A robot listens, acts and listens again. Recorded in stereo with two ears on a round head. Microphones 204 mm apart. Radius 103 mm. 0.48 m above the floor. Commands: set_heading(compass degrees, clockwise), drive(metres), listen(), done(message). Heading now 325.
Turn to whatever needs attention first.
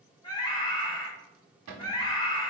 set_heading(305)
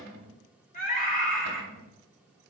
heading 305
set_heading(165)
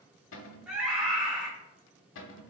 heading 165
done("Facing the scream.")